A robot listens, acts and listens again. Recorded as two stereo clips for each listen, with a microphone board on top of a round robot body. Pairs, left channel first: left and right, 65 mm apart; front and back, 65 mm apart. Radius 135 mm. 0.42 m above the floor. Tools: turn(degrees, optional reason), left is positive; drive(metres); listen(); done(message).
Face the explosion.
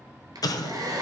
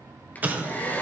turn(degrees=115, reason="The explosion: 115° left.")
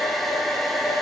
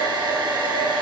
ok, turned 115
done("I heard an explosion from this way, but can't make it out now.")